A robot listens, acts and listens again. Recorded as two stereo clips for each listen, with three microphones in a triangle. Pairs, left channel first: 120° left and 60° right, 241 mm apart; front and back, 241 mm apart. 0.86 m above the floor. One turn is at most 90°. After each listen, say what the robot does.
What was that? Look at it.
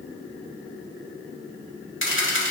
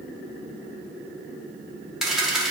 Turn 90° left.
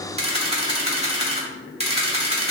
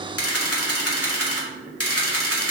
Facing the camera shutter, 1 to 2 m away.